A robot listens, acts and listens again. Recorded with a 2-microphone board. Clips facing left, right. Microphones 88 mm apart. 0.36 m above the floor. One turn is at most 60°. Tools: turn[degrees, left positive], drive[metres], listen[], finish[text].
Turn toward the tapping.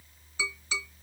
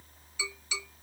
Thought: The tapping: about 40° left or 140° left.
Action: turn[40]
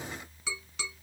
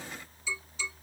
Thought: So it is at 100° left.
Action: turn[60]
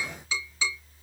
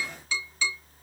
Thought: The tapping is now 20° left.
Action: turn[20]
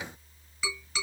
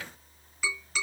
Action: finish[Found it: tapping, straight ahead.]